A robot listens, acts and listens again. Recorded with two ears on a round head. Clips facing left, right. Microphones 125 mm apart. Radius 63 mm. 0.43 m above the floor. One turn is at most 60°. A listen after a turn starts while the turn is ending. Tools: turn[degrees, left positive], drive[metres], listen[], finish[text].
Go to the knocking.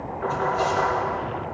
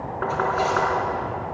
Action: turn[-60]
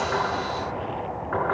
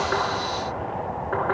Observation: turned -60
Thought: So it is at 40° right.
Action: turn[-40]
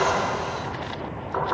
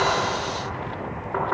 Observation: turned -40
Action: drive[1.0]
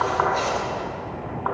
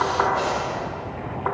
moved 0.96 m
Thought: The knocking is now 10° right.
Action: turn[-10]
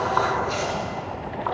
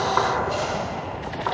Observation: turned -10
Action: drive[1.0]
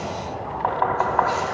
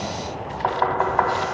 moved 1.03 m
Action: drive[1.0]
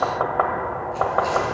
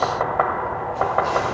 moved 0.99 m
Action: drive[1.0]
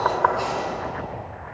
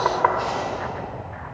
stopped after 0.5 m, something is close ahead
Thought: The knocking is now 10° right.
Action: turn[-10]
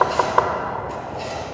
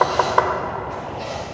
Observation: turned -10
Action: finish[Arrived at the knocking, straight ahead.]